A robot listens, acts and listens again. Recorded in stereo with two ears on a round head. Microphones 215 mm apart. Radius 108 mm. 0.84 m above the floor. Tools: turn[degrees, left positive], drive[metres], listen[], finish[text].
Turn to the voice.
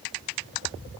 Action: listen[]
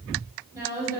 Action: turn[-30]
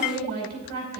Thought: So it is at 135° right.
Action: turn[-135]
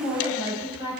Thought: The woman speaking is now 10° right.
Action: turn[-10]
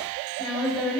Action: finish[Found it: a woman speaking, straight ahead.]